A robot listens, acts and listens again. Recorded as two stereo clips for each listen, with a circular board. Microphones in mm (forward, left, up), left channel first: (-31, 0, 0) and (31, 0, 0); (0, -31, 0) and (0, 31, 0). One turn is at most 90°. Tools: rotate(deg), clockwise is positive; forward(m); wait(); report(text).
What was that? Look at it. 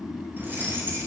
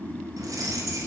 rotate(-55)
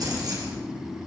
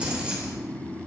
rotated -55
rotate(-15)
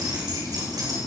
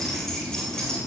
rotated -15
rotate(15)
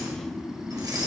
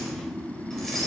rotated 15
report("Facing the keys jangling.")